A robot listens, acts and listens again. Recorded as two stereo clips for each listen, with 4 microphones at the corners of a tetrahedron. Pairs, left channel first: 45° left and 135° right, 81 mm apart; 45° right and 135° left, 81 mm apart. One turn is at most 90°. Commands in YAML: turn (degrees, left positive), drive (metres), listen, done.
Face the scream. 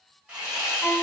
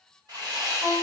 listen: true
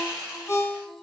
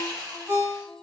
listen: true
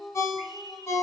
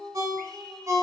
done: "I can't make out a scream, only sawing and a ringtone."